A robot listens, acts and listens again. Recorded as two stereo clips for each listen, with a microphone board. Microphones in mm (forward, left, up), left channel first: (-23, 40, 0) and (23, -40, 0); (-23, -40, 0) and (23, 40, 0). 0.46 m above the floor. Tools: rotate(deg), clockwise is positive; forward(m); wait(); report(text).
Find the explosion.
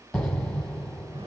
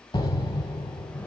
rotate(155)
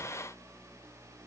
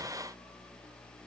report("I heard an explosion from this way, but can't make it out now.")